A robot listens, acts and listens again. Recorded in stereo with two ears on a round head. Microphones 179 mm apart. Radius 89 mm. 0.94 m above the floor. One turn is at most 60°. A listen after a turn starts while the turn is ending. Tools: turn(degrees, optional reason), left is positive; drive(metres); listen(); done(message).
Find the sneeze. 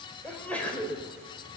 turn(degrees=30)
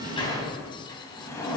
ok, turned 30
listen()
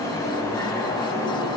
done("I heard a sneeze, but can't make it out now. It was about 25° right or 145° left.")